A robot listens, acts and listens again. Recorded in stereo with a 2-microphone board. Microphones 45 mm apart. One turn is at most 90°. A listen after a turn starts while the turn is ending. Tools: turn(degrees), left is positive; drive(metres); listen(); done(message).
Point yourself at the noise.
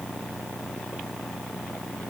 listen()
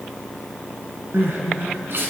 turn(degrees=-60)
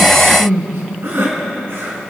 turn(degrees=-60)
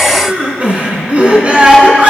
turn(degrees=-30)
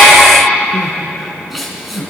done("Found it: crying, straight ahead.")